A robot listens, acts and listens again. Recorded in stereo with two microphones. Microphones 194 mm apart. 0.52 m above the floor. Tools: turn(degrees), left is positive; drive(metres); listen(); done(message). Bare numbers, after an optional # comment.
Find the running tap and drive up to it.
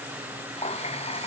# The running tap: about 30° left or 150° left.
turn(30)
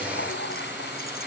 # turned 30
# So it is at 115° left.
turn(115)
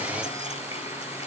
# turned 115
listen()
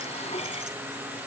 # The running tap is now 30° left.
turn(30)
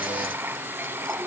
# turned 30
# The running tap is now 10° right.
turn(-10)
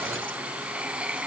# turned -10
drive(1.0)
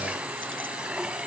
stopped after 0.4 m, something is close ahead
done("Blocked. The running tap is further on, straight ahead.")